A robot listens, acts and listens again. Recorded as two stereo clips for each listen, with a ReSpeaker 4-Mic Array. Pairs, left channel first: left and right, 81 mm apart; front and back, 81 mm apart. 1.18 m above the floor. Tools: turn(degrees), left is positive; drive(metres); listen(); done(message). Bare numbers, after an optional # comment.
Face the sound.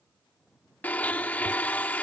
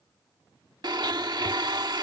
# The blender: 160° left.
turn(160)
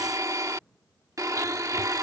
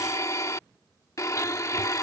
# The blender is now 45° right.
turn(-45)
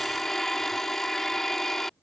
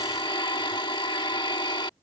done("Facing the blender.")